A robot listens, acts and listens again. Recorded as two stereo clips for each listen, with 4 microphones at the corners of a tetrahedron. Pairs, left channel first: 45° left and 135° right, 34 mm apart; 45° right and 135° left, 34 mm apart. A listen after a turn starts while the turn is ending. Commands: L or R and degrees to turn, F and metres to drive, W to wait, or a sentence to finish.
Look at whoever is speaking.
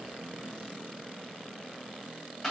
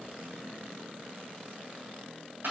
W
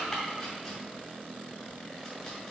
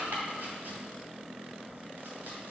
W
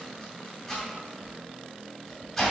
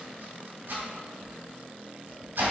I can't make out anyone speaking, only chopping.